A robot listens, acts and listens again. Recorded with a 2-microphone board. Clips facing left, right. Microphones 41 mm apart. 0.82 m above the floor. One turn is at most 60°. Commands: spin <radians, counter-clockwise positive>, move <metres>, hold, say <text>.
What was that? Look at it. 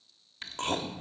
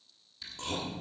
spin 0.87
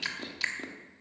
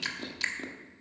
say Facing the chewing.